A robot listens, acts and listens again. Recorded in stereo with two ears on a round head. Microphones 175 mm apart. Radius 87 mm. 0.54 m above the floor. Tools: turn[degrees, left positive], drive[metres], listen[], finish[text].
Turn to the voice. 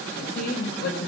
Thought: The woman speaking: about 55° left or 125° left.
Action: turn[55]
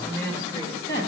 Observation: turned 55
Thought: So it is at 20° left.
Action: turn[20]
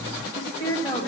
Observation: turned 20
Thought: The woman speaking is now 20° left.
Action: turn[20]
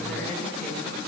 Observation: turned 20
Action: listen[]
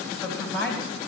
Thought: The woman speaking is now 10° left.
Action: turn[10]
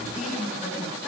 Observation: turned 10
Action: finish[Facing the woman speaking, 2 to 4 m away.]